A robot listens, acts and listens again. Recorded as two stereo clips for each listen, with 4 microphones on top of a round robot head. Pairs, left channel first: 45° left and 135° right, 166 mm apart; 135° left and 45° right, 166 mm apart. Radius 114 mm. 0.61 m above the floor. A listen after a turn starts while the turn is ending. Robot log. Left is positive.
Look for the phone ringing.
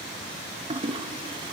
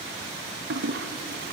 cmd idle
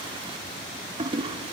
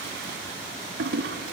cmd idle
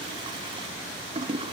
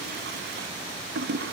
end: I can't make out a phone ringing to turn to.